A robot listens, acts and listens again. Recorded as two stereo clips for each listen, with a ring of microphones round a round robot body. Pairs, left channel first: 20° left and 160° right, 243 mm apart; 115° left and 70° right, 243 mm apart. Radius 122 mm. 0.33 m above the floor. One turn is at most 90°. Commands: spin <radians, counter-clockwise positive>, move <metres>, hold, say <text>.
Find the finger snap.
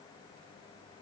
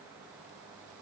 hold
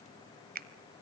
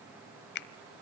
spin 1.57
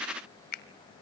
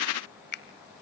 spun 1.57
spin 1.22
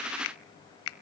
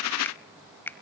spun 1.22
spin 0.52
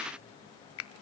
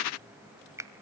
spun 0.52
spin 0.17
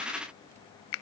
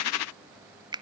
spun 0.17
say Found it: a finger snap, straight ahead.